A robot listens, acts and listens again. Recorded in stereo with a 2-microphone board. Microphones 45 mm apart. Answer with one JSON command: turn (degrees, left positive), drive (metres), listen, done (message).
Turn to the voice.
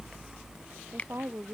{"turn": -65}
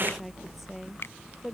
{"listen": true}
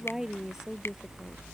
{"turn": -10}
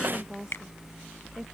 {"listen": true}
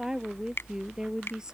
{"turn": -15}
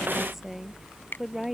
{"done": "Facing the woman speaking."}